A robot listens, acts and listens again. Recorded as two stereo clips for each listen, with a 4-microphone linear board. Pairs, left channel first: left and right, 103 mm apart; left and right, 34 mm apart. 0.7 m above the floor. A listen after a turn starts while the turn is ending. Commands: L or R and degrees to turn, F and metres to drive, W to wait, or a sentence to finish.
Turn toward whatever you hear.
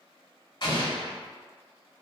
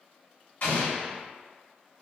L50
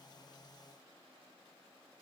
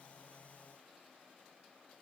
W
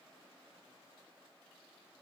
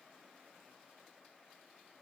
I heard an explosion, but can't make it out now. It was about straight ahead or 80° left.